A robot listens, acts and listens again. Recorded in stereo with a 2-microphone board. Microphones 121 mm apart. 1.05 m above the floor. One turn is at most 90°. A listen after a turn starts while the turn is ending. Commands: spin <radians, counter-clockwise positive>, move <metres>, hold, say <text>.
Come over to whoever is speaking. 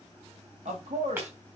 spin -1.31
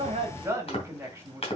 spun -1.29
spin -0.35
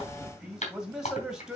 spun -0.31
move 1.0
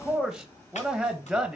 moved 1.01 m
move 1.0
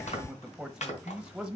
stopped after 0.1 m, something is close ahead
say Arrived at the man speaking, straight ahead.